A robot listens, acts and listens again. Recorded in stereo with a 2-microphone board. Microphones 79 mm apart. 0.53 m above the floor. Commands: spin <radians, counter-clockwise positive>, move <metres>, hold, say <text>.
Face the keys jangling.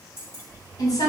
spin 0.61
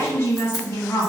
hold
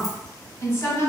hold
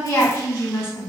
say I heard keys jangling, but can't make it out now. It was about straight ahead or 110° left.